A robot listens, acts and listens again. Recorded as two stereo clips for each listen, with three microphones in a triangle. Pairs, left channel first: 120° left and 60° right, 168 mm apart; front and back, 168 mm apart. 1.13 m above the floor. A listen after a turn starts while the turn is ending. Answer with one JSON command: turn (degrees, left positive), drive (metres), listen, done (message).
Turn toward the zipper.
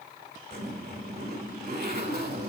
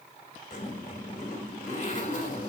{"turn": -45}
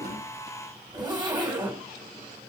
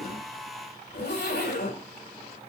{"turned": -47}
{"done": "Found it: a zipper, straight ahead, 2 to 4 m away."}